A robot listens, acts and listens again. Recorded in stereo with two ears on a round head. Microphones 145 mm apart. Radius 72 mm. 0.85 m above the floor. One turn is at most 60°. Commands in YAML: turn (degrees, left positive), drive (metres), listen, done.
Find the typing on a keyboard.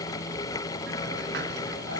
listen: true
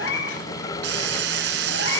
listen: true
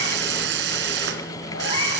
done: "I can't make out typing on a keyboard, only a hiss and a cat meowing."